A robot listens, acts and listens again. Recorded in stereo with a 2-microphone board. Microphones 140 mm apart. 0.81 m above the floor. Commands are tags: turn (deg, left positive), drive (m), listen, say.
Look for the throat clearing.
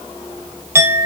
<listen/>
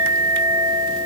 <listen/>
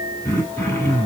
<turn deg="20"/>
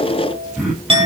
<say>Facing the throat clearing, over 4 m away.</say>